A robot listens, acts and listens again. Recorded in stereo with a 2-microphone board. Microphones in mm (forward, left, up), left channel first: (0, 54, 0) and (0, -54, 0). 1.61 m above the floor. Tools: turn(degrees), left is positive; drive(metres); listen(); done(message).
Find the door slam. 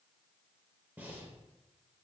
listen()
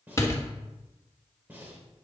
turn(degrees=25)
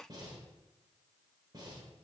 listen()
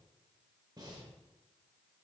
done("I heard a door slam, but can't make it out now. It was about straight ahead or 130° left.")